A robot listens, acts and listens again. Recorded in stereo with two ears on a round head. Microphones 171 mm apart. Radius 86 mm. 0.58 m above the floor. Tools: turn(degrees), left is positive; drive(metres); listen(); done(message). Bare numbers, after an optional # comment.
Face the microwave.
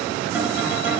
listen()
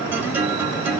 listen()
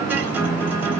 done("I can't make out a microwave to turn to.")